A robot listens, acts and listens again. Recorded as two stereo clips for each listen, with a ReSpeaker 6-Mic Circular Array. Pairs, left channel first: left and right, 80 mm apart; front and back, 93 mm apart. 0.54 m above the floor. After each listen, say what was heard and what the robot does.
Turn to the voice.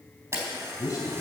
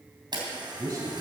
The man speaking: 130° left. Turn 130° left.
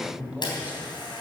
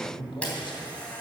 The man speaking is now 20° right. Turn 20° right.
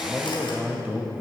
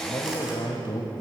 The man speaking is now 25° right. Turn 25° right.
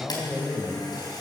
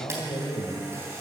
The man speaking is now 10° right. Turn 10° right.
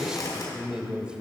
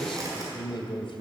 The man speaking is now 15° right. Turn 15° right.
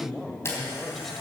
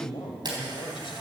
Facing the man speaking.